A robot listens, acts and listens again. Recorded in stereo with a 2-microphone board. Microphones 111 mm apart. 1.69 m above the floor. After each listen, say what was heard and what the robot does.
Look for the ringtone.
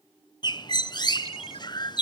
The ringtone: about 60° left or 120° left. Turn 60° left.
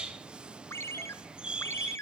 So it is at 25° left. Turn 25° left.
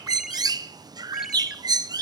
Keep listening.
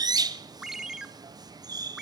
Facing the ringtone.